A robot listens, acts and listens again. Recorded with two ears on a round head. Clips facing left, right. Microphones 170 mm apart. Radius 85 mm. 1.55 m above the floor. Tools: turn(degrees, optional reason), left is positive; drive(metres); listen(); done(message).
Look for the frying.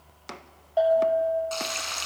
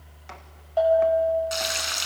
turn(degrees=-30)
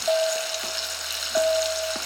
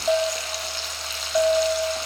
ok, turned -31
turn(degrees=15, reason="So it is at 15° left.")
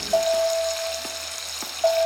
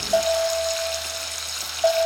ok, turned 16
done("Facing the frying.")